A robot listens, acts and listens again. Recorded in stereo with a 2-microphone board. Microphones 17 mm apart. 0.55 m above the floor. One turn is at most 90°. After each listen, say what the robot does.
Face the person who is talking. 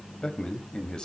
Turn 55° left.
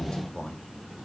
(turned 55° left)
Turn 65° left.
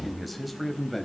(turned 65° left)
Found it: a man speaking, straight ahead.